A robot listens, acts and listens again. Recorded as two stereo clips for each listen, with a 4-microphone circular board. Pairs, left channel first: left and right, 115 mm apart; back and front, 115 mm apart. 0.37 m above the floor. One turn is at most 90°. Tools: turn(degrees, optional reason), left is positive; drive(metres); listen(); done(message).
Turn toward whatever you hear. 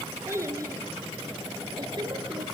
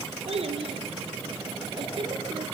turn(degrees=-40, reason="The child speaking: 40° right.")
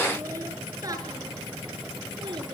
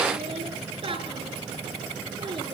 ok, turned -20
turn(degrees=-45, reason="The child speaking is now 45° right.")
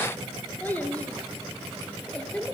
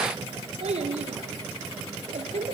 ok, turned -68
turn(degrees=10, reason="The child speaking is now 10° left.")
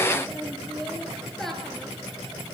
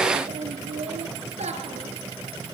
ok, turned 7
done("Found it: a child speaking, straight ahead, over 4 m away.")